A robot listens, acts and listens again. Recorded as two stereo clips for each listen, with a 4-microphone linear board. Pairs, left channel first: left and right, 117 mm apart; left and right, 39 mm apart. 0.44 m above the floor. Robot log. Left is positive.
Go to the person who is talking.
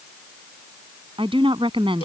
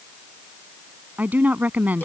note: The woman speaking: about 50° right or 130° right.
cmd yaw -50
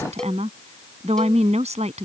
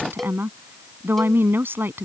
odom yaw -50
note: So it is at 80° right.
cmd yaw -80
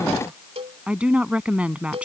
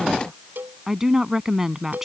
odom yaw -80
note: The woman speaking is now 10° right.
cmd yaw -10
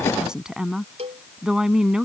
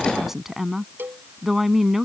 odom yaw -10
cmd fwd 1.0
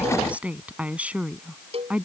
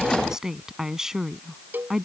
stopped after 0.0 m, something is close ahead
note: The woman speaking is now 15° right.
cmd yaw -15
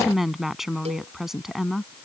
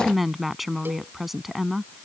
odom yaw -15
end: Something is in my way. I am facing the woman speaking but have not reached it.